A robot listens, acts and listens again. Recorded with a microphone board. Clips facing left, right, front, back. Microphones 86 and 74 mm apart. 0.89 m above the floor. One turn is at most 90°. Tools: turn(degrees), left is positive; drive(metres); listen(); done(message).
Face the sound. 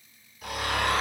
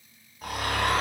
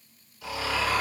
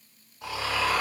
turn(degrees=-90)
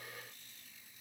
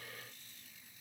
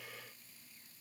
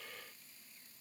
turn(degrees=-40)
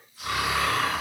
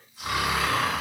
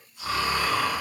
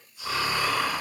turn(degrees=-25)
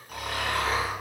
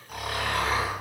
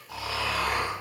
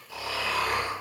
done("Facing the snoring.")